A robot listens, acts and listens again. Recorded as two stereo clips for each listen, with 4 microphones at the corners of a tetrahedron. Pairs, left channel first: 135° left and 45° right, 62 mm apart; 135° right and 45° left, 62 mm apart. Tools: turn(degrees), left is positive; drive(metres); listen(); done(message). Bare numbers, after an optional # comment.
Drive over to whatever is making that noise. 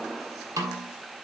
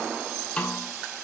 # The snare drum: 65° right.
turn(-65)
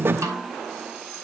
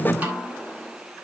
# The snare drum is now 15° right.
turn(-15)
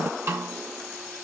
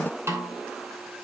drive(1.0)
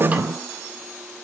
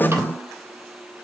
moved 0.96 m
listen()
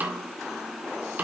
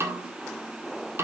# The snare drum is now 10° left.
turn(10)
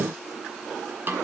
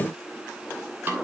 drive(1.0)
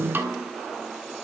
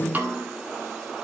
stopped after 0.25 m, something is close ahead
done("I am next to the snare drum.")